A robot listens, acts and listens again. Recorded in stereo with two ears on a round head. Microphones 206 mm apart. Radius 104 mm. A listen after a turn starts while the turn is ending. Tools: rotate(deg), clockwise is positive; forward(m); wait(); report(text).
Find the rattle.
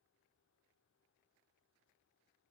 wait()
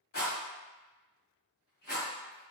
rotate(-40)
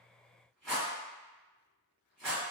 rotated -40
report("Facing the rattle.")